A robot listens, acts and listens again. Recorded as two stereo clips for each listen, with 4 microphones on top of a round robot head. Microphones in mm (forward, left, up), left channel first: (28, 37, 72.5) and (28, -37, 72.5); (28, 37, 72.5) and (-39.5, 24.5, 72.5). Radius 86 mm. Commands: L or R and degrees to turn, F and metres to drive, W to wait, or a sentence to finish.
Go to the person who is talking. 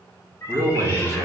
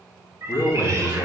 R45
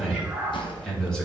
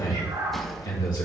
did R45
L10
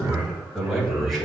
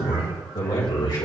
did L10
F1.0
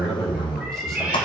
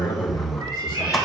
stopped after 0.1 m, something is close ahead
Blocked. The man speaking is further on, straight ahead.